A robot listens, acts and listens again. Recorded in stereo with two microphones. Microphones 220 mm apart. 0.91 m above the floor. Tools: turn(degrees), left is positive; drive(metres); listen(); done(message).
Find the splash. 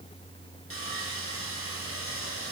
listen()
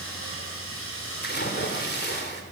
turn(degrees=50)
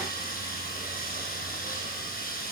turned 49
listen()
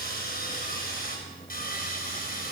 done("I heard a splash, but can't make it out now. It was about straight ahead or 80° left.")